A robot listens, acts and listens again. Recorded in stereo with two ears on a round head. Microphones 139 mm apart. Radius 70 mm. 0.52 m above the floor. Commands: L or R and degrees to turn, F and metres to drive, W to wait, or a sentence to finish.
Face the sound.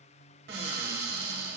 R70
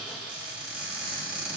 Found it: a cupboard door, straight ahead, 1 to 2 m away.